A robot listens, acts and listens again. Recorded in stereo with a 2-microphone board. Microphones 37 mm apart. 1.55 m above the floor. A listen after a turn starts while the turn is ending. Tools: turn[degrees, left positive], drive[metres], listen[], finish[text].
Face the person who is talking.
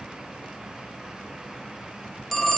Action: listen[]
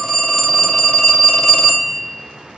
Action: listen[]
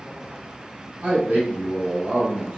Thought: The man speaking: about 60° right or 120° right.
Action: turn[-60]
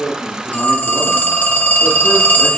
Action: listen[]
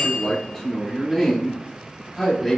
Action: finish[Found it: a man speaking, straight ahead, 2 to 4 m away.]